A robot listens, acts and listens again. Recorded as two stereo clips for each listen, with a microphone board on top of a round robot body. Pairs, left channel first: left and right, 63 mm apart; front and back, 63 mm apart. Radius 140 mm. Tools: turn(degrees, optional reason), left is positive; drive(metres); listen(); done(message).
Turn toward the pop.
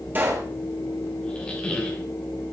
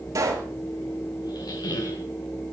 turn(degrees=-150, reason="The pop: 150° right.")
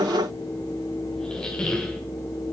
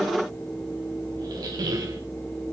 done("Facing where the pop came from. I can't hear it now.")